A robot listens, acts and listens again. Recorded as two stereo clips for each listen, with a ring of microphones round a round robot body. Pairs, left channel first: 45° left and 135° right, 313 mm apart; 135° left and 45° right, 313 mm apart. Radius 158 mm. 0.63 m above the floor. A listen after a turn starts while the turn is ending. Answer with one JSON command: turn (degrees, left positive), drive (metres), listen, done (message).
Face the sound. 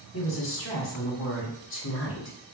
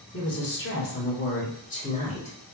{"turn": 75}
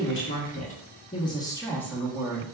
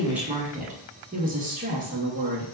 {"turn": -55}
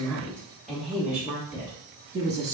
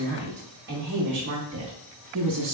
{"turn": -60}
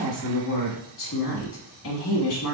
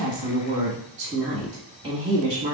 {"turn": 25}
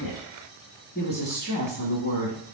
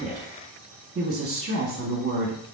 {"done": "Facing the woman speaking."}